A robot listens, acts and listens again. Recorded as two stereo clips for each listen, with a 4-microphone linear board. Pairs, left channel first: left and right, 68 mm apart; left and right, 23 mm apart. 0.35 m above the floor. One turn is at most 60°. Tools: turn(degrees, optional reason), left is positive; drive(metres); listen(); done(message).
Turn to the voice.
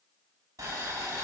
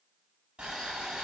listen()
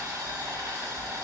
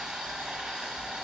listen()
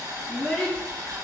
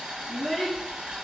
turn(degrees=20, reason="The child speaking: about 20° left or 160° left.")
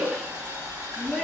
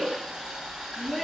done("Facing the child speaking.")